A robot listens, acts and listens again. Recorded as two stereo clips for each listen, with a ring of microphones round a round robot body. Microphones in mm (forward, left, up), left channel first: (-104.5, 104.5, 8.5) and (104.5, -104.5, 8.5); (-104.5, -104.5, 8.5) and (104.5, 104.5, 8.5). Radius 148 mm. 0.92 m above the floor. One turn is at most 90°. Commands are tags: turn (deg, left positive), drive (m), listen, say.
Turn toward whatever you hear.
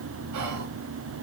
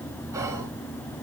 <turn deg="-35"/>
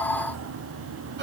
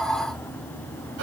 <listen/>
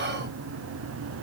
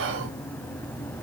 <say>Facing the whispering, under 1 m away.</say>